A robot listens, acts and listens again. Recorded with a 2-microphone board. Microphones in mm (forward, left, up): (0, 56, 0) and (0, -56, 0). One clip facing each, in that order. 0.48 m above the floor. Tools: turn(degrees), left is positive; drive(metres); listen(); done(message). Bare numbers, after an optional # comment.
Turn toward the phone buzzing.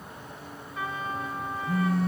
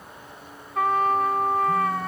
# The phone buzzing: about 75° left or 105° left.
turn(75)
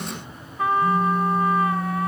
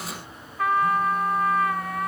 # So it is at 30° left.
turn(30)
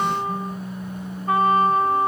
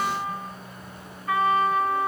# The phone buzzing is now 10° left.
turn(10)
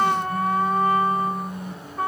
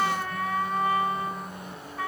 done("Facing the phone buzzing, 2 to 4 m away.")